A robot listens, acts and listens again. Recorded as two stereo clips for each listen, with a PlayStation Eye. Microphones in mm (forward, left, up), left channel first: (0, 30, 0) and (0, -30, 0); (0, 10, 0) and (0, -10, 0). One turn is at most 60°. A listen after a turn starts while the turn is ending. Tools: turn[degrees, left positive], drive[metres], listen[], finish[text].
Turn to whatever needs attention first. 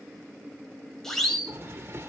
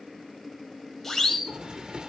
Action: turn[30]
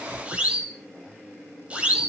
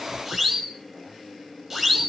Thought: So it is at 20° right.
Action: turn[-20]
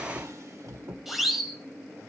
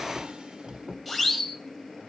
Action: finish[Facing the siren.]